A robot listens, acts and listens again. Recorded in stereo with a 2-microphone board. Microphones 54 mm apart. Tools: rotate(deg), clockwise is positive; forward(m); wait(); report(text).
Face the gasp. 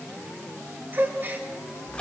rotate(40)
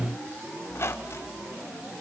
wait()
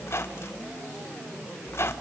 report("I heard a gasp, but can't make it out now. It was about straight ahead or 100° right.")